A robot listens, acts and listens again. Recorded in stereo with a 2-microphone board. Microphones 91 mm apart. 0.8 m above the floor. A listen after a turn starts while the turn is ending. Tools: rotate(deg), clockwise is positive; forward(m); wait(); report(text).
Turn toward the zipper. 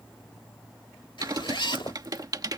rotate(-65)
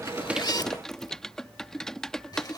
rotate(-50)
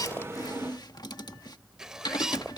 rotate(10)
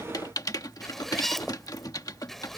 report("Found it: a zipper, straight ahead.")